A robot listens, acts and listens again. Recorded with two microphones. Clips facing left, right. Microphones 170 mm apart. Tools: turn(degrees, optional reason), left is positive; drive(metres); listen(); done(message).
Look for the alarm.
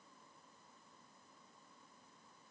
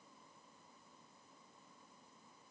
listen()
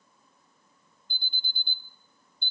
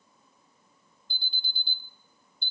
turn(degrees=55, reason="The alarm: about 55° left or 125° left.")
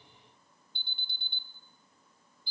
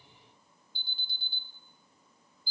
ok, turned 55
turn(degrees=70, reason="So it is at 70° left.")
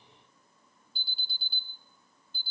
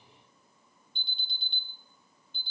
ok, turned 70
done("Facing the alarm.")